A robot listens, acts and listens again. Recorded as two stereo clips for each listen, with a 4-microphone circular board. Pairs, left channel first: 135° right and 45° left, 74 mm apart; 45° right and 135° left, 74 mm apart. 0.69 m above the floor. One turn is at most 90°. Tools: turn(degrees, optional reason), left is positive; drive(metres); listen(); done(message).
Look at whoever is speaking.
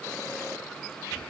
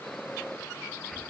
listen()
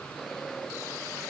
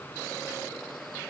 listen()
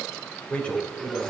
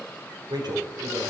turn(degrees=90, reason="The man speaking: 150° left.")
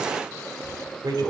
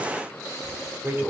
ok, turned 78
turn(degrees=75, reason="The man speaking is now 75° left.")
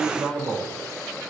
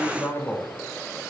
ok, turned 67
done("Facing the man speaking.")